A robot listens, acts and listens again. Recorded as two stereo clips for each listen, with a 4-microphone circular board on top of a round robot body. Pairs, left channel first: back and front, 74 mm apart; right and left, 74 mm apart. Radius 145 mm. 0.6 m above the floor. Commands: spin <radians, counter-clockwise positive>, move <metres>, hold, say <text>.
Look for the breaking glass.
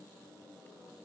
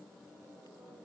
hold
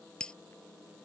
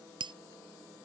spin 1.75
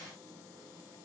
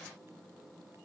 say I heard breaking glass from this way, but can't make it out now.